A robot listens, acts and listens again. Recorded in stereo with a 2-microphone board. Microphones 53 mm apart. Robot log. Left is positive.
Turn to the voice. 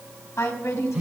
note: The woman speaking: about 60° left or 120° left.
cmd yaw +60
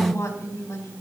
note: So it is at 55° left.
cmd yaw +55
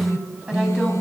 note: The woman speaking is now 15° right.
cmd yaw -15
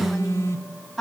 end: Found it: a woman speaking, straight ahead, over 4 m away.